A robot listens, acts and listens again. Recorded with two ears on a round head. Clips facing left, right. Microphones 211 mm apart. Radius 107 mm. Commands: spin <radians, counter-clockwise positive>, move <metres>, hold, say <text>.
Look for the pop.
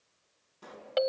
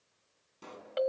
spin -0.70
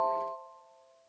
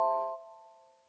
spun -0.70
hold
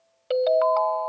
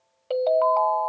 say I heard a pop, but can't make it out now. It was about straight ahead or 100° right.